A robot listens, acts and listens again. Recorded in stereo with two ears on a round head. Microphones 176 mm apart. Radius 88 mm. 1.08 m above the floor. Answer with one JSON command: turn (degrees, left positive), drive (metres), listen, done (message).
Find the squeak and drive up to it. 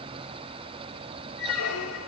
{"turn": 90}
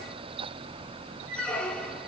{"drive": 1.0}
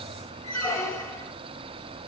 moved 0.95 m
{"turn": 15}
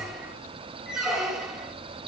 {"drive": 1.0}
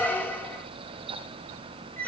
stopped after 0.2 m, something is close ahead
{"turn": 10}
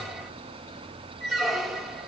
{"done": "Arrived at the squeak, straight ahead."}